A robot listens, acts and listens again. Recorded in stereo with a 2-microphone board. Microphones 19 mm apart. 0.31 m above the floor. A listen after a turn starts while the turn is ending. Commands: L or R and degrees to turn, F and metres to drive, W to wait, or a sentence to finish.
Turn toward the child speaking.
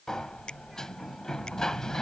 W
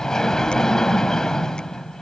W
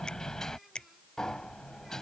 I can't make out a child speaking, only a sliding door.